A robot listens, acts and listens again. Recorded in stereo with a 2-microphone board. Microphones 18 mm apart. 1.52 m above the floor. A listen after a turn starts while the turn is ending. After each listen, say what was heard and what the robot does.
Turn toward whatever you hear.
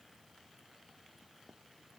Keep listening.
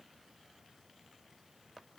Keep listening.
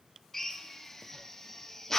The drill: about 15° left or 165° left. Turn 15° left.
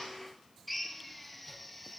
Facing the drill, 1 to 2 m away.